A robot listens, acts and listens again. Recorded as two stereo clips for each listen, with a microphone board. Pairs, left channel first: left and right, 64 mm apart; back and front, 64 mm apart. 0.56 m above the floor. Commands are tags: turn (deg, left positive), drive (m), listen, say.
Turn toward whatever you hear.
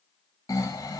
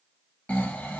<turn deg="115"/>
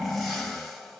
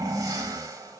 <say>Found it: snoring, straight ahead, under 1 m away.</say>